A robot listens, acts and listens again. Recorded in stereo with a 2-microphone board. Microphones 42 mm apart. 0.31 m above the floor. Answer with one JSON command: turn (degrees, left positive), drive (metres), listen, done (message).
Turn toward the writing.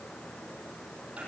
{"listen": true}
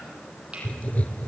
{"turn": 35}
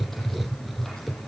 {"done": "Found it: writing, straight ahead."}